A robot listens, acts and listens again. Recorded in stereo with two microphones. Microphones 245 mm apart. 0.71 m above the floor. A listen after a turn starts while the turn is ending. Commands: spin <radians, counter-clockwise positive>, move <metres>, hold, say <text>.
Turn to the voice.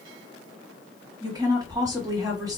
spin -0.52
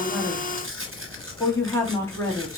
spin 0.26
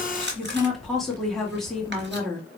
say Facing the woman speaking, 1 to 2 m away.